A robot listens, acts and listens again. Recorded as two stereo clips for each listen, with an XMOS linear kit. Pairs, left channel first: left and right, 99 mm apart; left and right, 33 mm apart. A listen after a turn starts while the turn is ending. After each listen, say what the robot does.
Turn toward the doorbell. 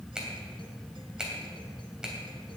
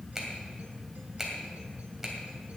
Keep listening.
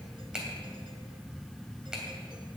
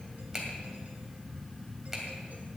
Keep listening.
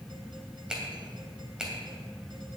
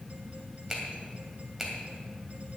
I can't make out a doorbell to turn to.